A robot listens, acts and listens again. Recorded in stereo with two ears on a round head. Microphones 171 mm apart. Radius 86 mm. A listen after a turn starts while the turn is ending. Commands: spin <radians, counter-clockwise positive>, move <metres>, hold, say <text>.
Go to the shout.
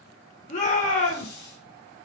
spin 0.70
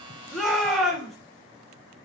move 1.0
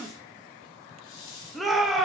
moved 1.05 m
move 1.0
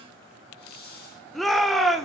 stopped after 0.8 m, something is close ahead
say I am next to the shout.